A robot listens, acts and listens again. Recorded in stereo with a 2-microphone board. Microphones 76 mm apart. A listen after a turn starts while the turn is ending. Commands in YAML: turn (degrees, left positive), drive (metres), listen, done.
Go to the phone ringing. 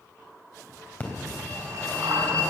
turn: 25
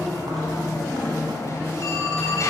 turn: 130
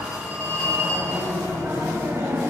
turn: -40
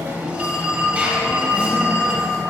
turn: -15
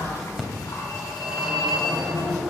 drive: 1.0
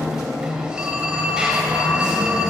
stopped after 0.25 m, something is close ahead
turn: -10
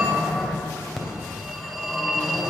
done: "Blocked. The phone ringing is further on, straight ahead."